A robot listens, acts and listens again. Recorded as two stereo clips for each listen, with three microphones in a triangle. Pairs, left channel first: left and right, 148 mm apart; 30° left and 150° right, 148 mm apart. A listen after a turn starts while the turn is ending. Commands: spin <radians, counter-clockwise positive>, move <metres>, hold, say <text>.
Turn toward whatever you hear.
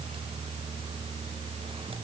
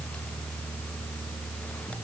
hold
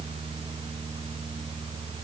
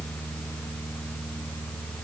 hold
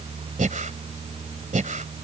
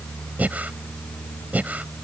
spin -1.22
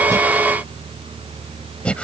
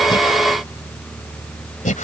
spin 0.17
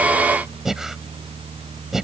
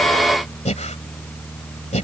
say Facing the breathing.